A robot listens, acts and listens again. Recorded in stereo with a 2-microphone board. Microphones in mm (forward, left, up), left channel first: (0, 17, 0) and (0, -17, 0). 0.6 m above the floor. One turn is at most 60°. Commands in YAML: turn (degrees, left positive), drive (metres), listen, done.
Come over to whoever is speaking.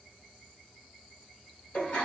listen: true
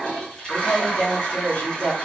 turn: 60
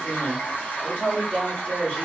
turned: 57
turn: 35
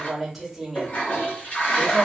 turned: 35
drive: 1.0
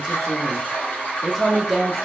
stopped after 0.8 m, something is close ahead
done: "Arrived at the woman speaking, straight ahead."